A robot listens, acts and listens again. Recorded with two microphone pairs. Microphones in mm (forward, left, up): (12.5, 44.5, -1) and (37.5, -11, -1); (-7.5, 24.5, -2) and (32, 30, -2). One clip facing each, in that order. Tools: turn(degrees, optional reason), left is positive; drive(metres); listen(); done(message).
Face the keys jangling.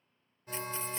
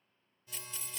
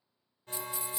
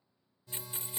turn(degrees=55, reason="The keys jangling: 55° left.")
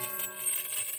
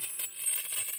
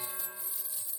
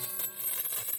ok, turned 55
turn(degrees=25, reason="The keys jangling is now 25° left.")
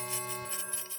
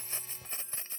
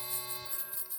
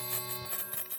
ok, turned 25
turn(degrees=-15, reason="The keys jangling is now 15° right.")
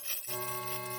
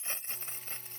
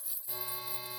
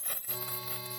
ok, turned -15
done("Found it: keys jangling, straight ahead.")